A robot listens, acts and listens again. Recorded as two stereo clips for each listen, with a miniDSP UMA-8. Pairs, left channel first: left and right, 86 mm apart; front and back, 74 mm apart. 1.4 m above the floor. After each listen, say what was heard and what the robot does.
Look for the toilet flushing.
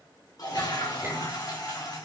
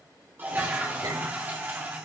The toilet flushing: 120° left. Turn 120° left.
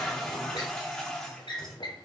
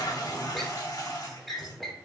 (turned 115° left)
Facing the toilet flushing.